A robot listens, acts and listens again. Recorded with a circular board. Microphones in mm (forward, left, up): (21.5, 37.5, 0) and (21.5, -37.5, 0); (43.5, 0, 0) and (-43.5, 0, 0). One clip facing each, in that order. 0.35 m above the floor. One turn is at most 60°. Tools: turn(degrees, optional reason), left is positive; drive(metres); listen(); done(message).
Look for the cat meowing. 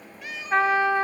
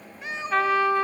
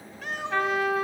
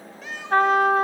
turn(degrees=-30, reason="The cat meowing: 30° right.")
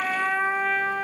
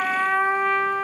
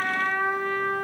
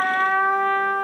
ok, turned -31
listen()
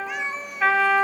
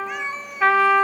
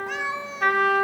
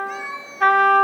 done("Found it: a cat meowing, straight ahead, under 1 m away.")